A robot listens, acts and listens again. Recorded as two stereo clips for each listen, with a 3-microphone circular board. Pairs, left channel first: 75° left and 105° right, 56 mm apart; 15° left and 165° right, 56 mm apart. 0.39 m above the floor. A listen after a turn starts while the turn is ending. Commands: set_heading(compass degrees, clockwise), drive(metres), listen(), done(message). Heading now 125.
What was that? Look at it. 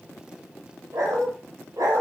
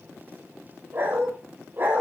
set_heading(240)
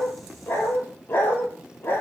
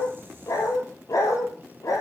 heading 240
set_heading(215)
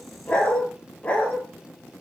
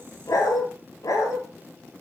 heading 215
done("Found it: a dog barking, straight ahead, 2 to 4 m away.")